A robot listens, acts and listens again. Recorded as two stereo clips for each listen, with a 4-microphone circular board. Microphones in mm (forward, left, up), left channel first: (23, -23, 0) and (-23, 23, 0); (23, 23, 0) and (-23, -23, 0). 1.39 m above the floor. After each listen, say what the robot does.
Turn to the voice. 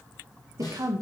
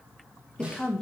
Turn 120° left.
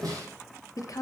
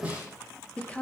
Turn 25° right.
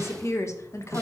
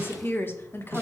Turn 10° right.
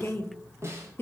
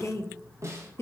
Found it: a woman speaking, straight ahead.